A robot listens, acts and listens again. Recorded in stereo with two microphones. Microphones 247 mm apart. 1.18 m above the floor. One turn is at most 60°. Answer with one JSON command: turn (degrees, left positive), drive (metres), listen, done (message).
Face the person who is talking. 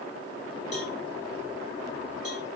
{"listen": true}
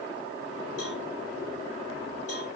{"listen": true}
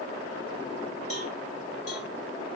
{"done": "I can't make out anyone speaking."}